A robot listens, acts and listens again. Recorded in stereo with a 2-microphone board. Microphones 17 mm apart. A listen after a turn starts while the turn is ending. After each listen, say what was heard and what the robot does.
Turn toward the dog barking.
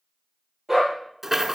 The dog barking: about 15° right or 165° right. Turn 15° right.
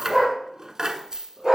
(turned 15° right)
The dog barking: about 25° right or 155° right. Turn 25° right.
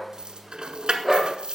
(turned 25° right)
Turn 30° right.
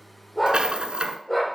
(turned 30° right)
So it is at 15° left. Turn 15° left.
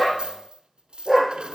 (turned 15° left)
The dog barking is now 10° right. Turn 10° right.
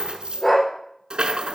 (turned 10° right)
Found it: a dog barking, straight ahead, over 4 m away.